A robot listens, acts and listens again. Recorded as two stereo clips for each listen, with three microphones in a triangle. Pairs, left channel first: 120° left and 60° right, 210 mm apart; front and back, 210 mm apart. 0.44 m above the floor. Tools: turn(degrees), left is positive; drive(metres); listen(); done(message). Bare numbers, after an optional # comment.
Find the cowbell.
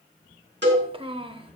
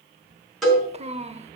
# The cowbell: 90° right.
turn(-90)
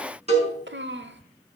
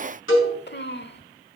done("Facing the cowbell, over 4 m away.")